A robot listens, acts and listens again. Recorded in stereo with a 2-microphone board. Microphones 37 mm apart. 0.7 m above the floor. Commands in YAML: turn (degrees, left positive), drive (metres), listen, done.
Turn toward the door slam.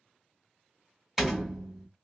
turn: -30
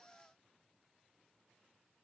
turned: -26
listen: true
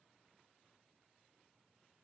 done: "I heard a door slam, but can't make it out now. It was about 25° left or 150° right."